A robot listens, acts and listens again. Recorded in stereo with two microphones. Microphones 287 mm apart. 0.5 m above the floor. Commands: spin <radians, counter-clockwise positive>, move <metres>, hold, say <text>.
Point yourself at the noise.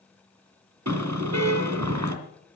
spin -1.22
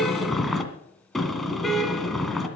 say Facing the car horn.